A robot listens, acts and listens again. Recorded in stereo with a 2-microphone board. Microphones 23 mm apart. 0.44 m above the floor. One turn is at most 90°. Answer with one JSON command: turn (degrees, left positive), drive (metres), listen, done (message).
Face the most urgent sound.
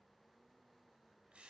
{"listen": true}
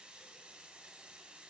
{"listen": true}
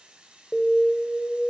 {"turn": -30}
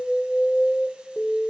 {"turn": 20}
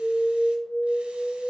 {"done": "Facing the alarm, under 1 m away."}